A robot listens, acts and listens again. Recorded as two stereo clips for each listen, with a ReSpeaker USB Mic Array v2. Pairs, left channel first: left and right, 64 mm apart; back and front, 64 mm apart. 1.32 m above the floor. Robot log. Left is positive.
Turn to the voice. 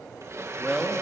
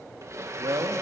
end: Facing the man speaking, 1 to 2 m away.